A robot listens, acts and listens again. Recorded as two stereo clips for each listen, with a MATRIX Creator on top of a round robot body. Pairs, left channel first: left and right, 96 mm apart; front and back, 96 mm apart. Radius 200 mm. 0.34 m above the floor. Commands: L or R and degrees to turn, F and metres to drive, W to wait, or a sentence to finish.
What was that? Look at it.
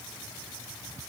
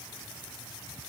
W
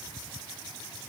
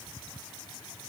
W
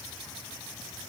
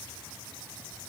I can't make out anything.